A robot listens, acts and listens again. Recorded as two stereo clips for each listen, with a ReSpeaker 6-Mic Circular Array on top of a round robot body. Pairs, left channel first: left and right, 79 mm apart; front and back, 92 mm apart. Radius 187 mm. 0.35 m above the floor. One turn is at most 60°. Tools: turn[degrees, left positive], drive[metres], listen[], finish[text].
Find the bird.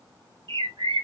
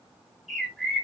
Thought: The bird: 90° right.
Action: turn[-60]
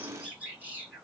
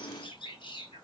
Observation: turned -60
Thought: The bird is now 20° right.
Action: turn[-20]
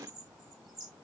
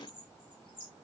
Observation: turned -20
Action: finish[Found it: a bird, straight ahead.]